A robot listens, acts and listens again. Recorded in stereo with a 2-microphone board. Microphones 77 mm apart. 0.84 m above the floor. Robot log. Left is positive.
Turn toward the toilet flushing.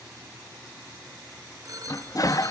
note: The toilet flushing: about 50° left or 130° left.
cmd yaw +50
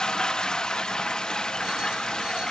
note: So it is at 10° left.
cmd yaw +10
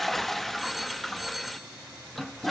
end: Found it: a toilet flushing, straight ahead.